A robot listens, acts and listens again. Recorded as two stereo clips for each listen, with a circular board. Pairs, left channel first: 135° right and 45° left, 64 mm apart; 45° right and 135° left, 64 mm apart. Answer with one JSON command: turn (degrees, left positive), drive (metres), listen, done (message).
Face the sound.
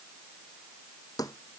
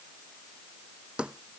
{"turn": -150}
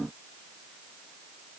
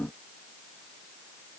{"done": "I heard a thud from this way, but can't make it out now."}